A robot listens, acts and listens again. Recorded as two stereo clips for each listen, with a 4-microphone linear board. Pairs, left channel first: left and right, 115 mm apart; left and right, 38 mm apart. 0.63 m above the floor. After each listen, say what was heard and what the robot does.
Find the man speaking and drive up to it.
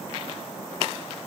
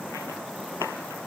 Keep listening.
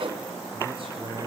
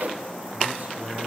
Keep listening.
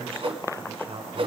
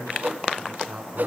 The man speaking: about 55° right or 125° right. Turn 55° right.
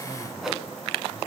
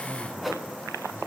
Keep listening.
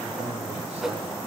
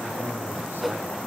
Keep listening.
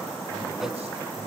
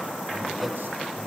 I heard a man speaking, but can't make it out now. It was about straight ahead or 70° right. I did not reach it.